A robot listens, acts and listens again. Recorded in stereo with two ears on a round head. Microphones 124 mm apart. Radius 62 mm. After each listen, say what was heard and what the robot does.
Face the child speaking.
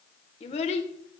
The child speaking: about 50° left or 130° left. Turn 50° left.
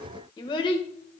So it is at 35° left. Turn 35° left.
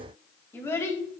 The child speaking is now 20° left. Turn 20° left.
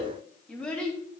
The child speaking is now 10° left. Turn 10° left.
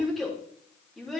Facing the child speaking.